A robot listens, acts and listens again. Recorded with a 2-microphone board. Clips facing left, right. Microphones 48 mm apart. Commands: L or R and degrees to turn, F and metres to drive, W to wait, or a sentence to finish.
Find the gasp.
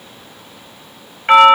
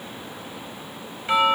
W
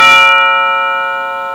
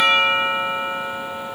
W
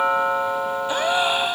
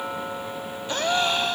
L30
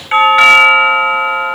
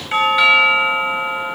W
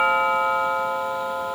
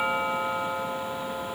I heard a gasp, but can't make it out now. It was about 15° right or 135° left.